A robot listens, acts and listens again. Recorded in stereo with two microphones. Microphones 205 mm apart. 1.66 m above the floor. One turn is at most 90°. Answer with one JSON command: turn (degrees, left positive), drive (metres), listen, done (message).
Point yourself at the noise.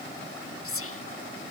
{"turn": 90}
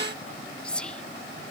{"done": "Facing the whispering."}